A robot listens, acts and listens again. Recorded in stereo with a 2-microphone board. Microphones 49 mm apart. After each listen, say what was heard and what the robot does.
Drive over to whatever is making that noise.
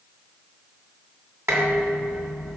The dishes clattering: about 55° right or 125° right. Turn 55° right.
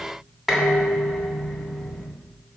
Drive 1.0 m forward.
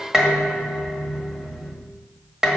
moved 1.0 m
The dishes clattering is now 15° right. Turn 15° right.
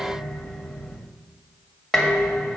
Drive 1.0 m forward.
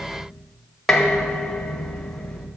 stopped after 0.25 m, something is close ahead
I am next to the dishes clattering.